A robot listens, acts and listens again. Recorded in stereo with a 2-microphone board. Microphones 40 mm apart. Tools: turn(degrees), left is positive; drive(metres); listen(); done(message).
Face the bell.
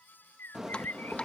turn(degrees=-30)
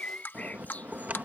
turn(degrees=-140)
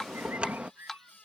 turn(degrees=-30)
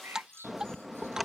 done("Found it: a bell, straight ahead.")